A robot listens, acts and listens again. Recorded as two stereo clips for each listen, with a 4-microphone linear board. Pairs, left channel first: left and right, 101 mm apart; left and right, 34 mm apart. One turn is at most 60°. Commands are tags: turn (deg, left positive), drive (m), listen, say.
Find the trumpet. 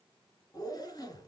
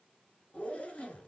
<listen/>
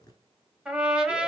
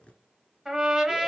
<turn deg="-30"/>
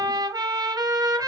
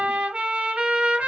<turn deg="-60"/>
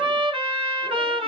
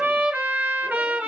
<turn deg="-60"/>
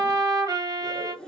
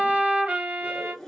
<turn deg="-45"/>
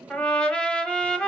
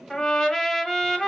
<turn deg="10"/>
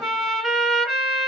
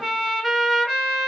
<say>Facing the trumpet, 1 to 2 m away.</say>